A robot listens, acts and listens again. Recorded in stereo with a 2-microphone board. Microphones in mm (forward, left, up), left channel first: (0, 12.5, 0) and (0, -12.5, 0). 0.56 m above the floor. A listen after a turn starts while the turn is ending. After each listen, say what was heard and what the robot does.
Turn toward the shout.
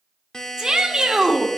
The shout: about 30° right or 150° right. Turn 30° right.
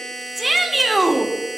Found it: a shout, straight ahead.